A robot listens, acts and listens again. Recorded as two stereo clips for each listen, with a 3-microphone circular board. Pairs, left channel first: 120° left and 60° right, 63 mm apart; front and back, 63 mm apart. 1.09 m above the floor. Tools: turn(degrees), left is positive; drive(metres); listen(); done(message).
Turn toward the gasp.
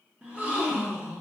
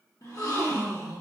turn(degrees=10)
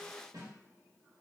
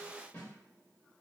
done("I heard a gasp from this way, but can't make it out now.")